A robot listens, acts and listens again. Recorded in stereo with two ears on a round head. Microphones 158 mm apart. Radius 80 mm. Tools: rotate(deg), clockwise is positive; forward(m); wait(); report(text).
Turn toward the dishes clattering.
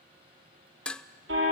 rotate(-30)
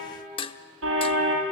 rotate(-145)
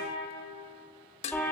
rotate(-40)
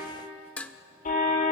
rotate(-10)
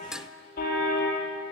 report("Found it: dishes clattering, straight ahead, under 1 m away.")